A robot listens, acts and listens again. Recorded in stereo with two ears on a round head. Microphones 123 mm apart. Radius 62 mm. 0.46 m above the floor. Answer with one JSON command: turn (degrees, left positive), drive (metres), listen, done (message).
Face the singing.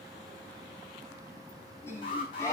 {"turn": 25}
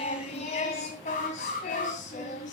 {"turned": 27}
{"turn": 115}
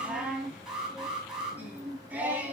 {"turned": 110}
{"turn": -10}
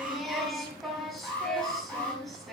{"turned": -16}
{"done": "Facing the singing, 2 to 4 m away."}